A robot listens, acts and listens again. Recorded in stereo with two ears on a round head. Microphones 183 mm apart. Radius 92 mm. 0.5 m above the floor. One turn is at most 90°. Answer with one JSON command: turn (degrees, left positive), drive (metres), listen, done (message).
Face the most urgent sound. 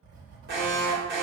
{"turn": -50}
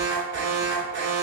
{"turn": -70}
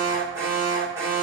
{"turn": -15}
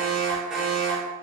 {"done": "Facing the alarm."}